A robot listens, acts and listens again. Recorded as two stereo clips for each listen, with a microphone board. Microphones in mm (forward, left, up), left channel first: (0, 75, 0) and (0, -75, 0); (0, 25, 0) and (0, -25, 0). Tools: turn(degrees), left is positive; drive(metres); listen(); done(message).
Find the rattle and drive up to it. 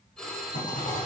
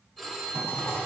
turn(degrees=60)
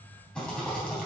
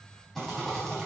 drive(metres=1.0)
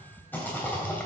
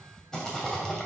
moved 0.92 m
turn(degrees=15)
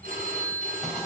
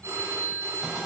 drive(metres=1.0)
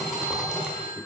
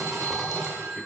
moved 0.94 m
drive(metres=1.0)
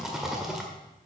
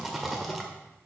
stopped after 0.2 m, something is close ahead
done("Arrived at the rattle, straight ahead.")